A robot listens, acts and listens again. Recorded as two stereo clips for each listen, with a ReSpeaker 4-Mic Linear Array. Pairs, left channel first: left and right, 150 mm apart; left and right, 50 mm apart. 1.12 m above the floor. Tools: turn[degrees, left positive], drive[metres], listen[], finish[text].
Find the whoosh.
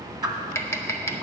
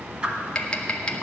Thought: The whoosh: about 25° right or 155° right.
Action: turn[-25]
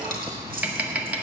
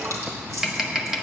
Action: listen[]
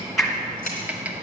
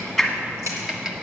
Action: finish[Facing the whoosh, 1 to 2 m away.]